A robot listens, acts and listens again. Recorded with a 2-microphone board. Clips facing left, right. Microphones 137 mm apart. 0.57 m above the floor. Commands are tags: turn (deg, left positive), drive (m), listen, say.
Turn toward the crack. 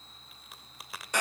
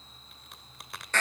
<turn deg="30"/>
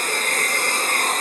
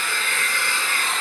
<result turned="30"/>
<listen/>
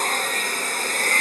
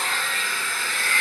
<say>I heard a crack, but can't make it out now. It was about 30° right or 150° left.</say>